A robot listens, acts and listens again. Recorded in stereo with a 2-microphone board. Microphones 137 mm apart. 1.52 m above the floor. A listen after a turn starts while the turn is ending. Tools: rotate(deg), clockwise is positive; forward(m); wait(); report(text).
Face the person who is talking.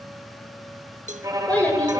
rotate(-30)
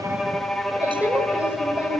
report("Found it: a child speaking, straight ahead.")